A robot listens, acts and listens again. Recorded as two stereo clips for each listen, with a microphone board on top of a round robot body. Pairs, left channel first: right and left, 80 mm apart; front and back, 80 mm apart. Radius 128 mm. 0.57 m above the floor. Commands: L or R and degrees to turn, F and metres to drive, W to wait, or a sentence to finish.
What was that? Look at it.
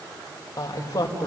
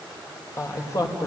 R50
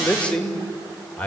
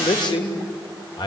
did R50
R20
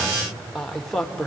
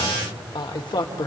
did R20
R10
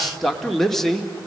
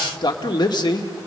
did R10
R10
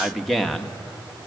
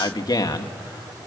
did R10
Found it: a man speaking, straight ahead.